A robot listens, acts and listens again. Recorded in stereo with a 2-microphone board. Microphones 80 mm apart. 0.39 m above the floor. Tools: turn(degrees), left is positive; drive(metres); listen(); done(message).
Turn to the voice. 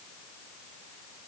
listen()
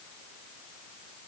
listen()
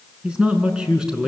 turn(degrees=-30)
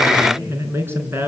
turn(degrees=-150)
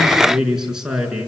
done("Facing the man speaking, over 4 m away.")